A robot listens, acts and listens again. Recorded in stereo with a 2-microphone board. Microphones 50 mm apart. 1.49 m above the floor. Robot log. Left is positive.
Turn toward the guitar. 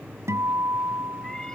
note: The guitar: about 75° right or 105° right.
cmd yaw -75
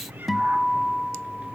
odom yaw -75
end: Found it: a guitar, straight ahead.